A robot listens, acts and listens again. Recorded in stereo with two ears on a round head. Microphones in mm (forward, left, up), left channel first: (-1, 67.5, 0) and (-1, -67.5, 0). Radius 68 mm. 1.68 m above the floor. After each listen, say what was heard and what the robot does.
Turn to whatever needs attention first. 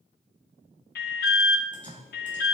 The alarm: about 70° left or 110° left. Turn 70° left.
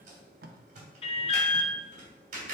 So it is at 40° left. Turn 40° left.
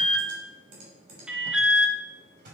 Found it: an alarm, straight ahead.